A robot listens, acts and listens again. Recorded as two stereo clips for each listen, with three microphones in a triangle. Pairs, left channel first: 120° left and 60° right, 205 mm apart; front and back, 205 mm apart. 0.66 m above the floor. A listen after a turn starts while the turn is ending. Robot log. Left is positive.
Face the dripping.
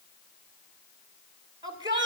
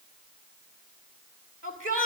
cmd idle
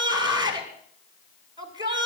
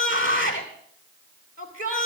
cmd idle
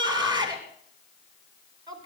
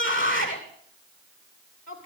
end: I can't make out dripping to turn to.